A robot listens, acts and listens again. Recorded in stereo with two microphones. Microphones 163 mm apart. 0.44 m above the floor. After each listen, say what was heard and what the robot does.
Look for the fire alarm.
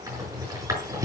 Keep listening.
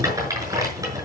Keep listening.
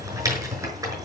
I can't make out a fire alarm to turn to.